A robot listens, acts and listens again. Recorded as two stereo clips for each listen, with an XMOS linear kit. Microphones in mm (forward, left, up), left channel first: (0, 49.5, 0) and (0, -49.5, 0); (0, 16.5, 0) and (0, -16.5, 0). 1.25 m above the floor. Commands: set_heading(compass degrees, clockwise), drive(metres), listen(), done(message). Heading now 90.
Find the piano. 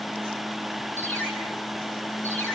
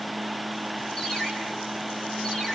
listen()
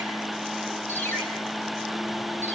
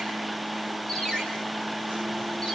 listen()
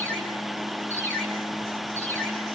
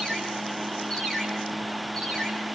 done("I can't make out a piano, only a ringtone.")